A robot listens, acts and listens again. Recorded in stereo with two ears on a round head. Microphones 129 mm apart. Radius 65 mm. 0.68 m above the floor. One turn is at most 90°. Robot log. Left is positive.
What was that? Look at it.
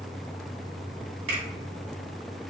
note: The finger snap: about 45° right or 135° right.
cmd yaw -45
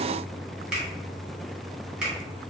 note: So it is at 10° right.
cmd yaw -10
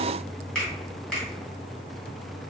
end: Facing the finger snap, 1 to 2 m away.